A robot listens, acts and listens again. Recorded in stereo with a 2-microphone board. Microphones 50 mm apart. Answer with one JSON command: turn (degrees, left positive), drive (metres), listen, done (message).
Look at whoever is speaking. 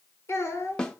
{"turn": 60}
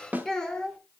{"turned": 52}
{"turn": 15}
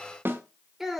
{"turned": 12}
{"done": "Found it: a child speaking, straight ahead."}